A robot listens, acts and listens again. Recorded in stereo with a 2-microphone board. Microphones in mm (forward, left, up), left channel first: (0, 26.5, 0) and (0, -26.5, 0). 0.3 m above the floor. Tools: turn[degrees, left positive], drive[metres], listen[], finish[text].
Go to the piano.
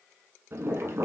Action: listen[]
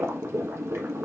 Action: listen[]
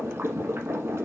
Action: finish[I can't make out a piano to turn to.]